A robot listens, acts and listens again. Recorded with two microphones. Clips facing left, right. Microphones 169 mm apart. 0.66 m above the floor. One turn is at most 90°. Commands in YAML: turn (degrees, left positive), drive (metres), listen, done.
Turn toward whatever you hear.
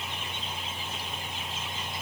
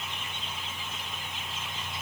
listen: true
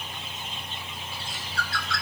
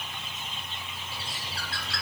turn: -35
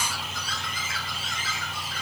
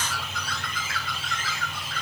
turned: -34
turn: -90
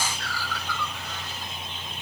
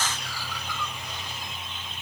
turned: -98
turn: -15
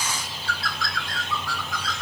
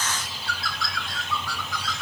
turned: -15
done: "Facing the bird."